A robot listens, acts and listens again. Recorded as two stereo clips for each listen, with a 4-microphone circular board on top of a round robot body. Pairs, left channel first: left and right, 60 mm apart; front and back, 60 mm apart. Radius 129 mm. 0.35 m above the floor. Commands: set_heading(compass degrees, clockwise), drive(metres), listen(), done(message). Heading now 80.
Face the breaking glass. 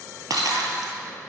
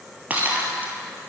set_heading(195)
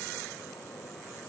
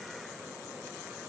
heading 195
done("Facing where the breaking glass came from. I can't hear it now.")